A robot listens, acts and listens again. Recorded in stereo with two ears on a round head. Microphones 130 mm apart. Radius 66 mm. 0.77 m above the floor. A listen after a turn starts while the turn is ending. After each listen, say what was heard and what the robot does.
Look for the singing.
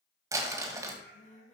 The singing: about 50° left or 130° left. Turn 50° left.
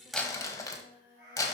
So it is at 70° left. Turn 70° left.
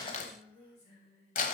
The singing is now 45° left. Turn 45° left.
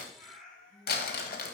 Facing the singing.